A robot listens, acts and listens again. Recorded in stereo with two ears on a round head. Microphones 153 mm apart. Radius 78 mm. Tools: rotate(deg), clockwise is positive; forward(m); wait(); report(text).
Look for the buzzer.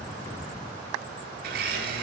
wait()
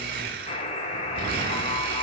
rotate(-40)
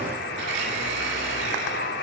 rotate(-100)
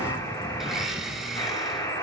rotate(-20)
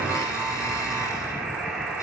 report("Found it: a buzzer, straight ahead.")